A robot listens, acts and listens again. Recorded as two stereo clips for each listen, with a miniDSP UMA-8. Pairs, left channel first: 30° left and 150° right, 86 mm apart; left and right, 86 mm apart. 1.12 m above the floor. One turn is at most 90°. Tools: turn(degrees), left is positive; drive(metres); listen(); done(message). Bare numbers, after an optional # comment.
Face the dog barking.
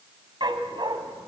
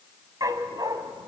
# The dog barking: 130° right.
turn(-90)
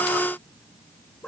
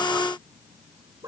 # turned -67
# Nothing new. It was at 60° right.
turn(-60)
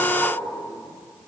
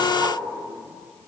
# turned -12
# Nothing new. It was at 50° right.
turn(-50)
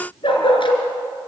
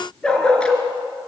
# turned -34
# The dog barking is now 10° left.
turn(10)
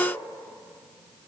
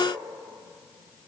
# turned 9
listen()
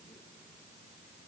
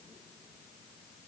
listen()
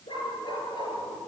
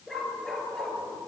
done("Found it: a dog barking, straight ahead.")